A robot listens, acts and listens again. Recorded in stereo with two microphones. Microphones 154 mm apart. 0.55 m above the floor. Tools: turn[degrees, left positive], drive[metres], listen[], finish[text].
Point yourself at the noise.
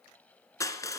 Thought: The crushing: about 20° left or 160° left.
Action: turn[20]
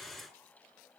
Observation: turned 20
Action: listen[]
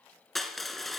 Action: finish[Facing the crushing, 1 to 2 m away.]